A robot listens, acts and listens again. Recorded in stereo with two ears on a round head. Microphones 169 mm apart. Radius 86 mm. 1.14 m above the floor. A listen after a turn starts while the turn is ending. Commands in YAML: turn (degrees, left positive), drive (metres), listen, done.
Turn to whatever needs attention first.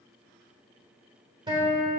listen: true
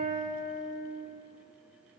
listen: true
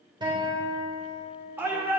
turn: -30
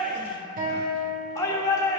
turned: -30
turn: 15
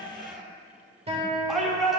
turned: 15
done: "Found it: a shout, straight ahead."